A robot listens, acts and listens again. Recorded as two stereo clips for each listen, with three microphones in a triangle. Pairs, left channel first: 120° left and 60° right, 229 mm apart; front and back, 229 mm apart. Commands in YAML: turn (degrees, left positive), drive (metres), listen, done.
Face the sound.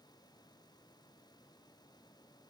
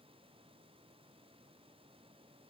listen: true
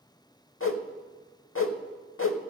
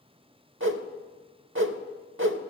turn: 150
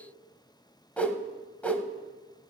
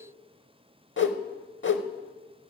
turn: 35
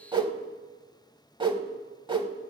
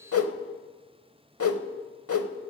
done: "Found it: a whoosh, straight ahead, under 1 m away."